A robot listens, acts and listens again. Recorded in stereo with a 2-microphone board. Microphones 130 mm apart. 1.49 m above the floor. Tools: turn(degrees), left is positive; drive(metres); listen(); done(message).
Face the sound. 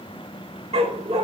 turn(degrees=-50)
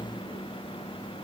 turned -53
listen()
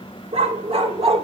turn(degrees=-60)
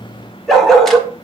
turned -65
done("Facing the dog barking, 1 to 2 m away.")